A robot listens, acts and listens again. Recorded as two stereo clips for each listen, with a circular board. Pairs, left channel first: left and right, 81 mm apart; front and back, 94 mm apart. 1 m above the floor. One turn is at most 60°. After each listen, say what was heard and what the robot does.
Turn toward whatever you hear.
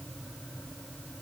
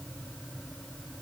Keep listening.
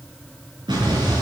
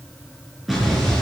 The explosion: 90° right. Turn 60° right.
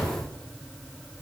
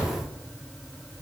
Nothing new. It was at 30° right. Turn 30° right.
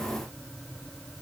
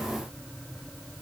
I heard an explosion from this way, but can't make it out now.